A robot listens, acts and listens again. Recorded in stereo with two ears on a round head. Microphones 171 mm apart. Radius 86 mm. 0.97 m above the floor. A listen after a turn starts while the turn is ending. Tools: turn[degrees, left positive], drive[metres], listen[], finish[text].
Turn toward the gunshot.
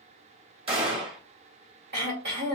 Thought: The gunshot: about 30° right or 150° right.
Action: turn[-30]
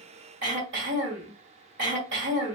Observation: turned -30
Action: listen[]
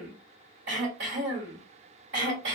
Action: finish[I heard a gunshot, but can't make it out now. It was about straight ahead or 120° right.]